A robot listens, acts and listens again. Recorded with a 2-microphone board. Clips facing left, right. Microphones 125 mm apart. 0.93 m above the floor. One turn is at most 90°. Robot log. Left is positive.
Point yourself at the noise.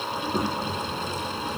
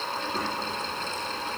note: The child speaking: about 20° left or 160° left.
cmd yaw +20
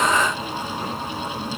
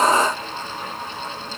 note: So it is at 140° left.
cmd yaw +90
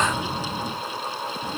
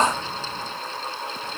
note: The child speaking is now 40° left.
cmd yaw +40
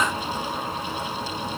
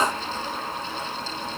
end: Facing the child speaking, 1 to 2 m away.